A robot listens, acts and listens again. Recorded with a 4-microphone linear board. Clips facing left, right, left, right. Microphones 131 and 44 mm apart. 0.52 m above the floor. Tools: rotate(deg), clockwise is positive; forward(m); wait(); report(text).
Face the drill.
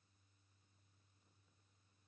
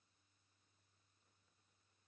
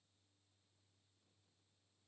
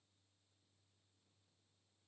wait()
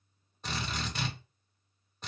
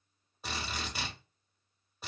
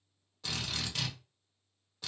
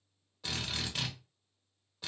rotate(30)
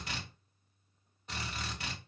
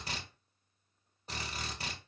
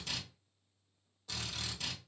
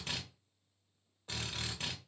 rotate(140)
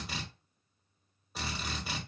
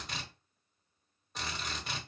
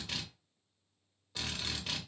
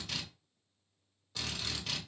report("Facing the drill, under 1 m away.")